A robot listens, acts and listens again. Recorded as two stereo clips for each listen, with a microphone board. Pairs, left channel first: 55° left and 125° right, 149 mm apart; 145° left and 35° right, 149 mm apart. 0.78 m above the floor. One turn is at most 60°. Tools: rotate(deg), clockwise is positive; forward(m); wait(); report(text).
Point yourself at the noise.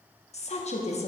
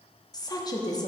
rotate(-60)
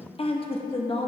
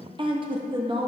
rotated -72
rotate(-15)
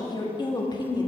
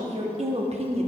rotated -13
report("Facing the woman speaking.")